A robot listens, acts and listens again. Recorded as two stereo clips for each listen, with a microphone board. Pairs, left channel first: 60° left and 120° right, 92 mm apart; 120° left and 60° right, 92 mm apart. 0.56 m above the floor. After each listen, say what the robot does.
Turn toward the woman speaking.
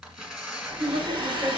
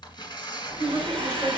Turn 115° right.
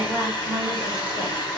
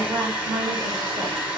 Turn 10° right.
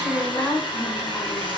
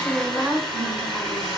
Found it: a woman speaking, straight ahead.